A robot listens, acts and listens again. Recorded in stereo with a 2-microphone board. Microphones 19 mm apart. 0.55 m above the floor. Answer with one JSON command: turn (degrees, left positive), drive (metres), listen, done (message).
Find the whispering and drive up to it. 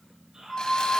{"turn": -40}
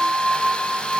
{"listen": true}
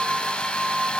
{"listen": true}
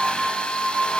{"done": "I heard whispering, but can't make it out now. It was about straight ahead or 100° right. I did not reach it."}